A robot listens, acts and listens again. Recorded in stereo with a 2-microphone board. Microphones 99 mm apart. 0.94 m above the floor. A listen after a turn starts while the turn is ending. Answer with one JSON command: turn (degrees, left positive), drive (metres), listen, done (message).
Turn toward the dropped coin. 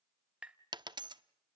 {"turn": -50}
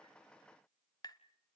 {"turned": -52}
{"listen": true}
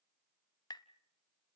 {"done": "I heard a dropped coin, but can't make it out now. It was about straight ahead or 80° right."}